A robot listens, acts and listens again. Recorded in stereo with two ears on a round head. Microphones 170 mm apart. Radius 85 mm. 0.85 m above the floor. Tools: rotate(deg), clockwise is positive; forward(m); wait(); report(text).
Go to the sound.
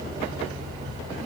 wait()
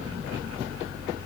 wait()
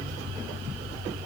report("I can't make out anything.")